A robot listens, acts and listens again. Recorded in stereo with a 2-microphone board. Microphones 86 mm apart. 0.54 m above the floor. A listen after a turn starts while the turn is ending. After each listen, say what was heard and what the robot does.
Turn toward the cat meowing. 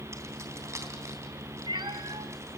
The cat meowing: about 65° right or 115° right. Turn 65° right.
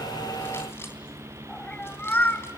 So it is at 25° left. Turn 25° left.
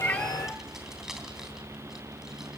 Keep listening.
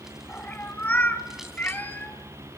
The cat meowing is now 20° left. Turn 20° left.
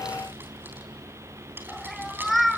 Facing the cat meowing, 1 to 2 m away.